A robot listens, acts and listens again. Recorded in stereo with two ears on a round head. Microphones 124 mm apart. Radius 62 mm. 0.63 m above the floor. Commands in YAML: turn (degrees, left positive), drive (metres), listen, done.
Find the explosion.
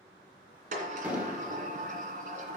turn: -30
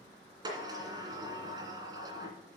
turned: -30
listen: true
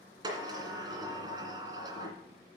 done: "I heard an explosion, but can't make it out now. It was about 15° left or 135° right."